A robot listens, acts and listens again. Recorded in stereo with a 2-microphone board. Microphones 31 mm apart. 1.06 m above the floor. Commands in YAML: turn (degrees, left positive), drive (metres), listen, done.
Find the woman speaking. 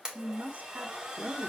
turn: -60
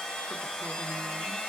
listen: true
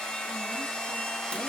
listen: true
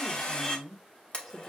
done: "Facing the woman speaking."